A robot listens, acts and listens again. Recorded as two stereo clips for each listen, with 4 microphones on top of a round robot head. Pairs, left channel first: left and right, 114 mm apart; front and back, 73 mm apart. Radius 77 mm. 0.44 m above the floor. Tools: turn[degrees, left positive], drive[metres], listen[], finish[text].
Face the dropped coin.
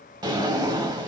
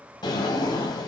Action: listen[]
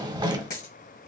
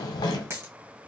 Thought: The dropped coin: 130° left.
Action: turn[130]
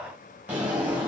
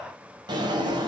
Action: finish[I heard a dropped coin from this way, but can't make it out now.]